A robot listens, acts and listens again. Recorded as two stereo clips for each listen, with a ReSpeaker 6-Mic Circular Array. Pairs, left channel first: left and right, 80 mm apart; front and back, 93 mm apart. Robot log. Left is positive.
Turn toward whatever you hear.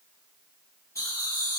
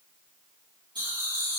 note: The laughter: 140° left.
cmd yaw +140
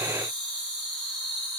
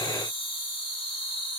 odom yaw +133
note: The laughter is now 10° left.
cmd yaw +10
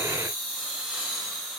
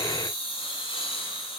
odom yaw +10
end: Facing the laughter, over 4 m away.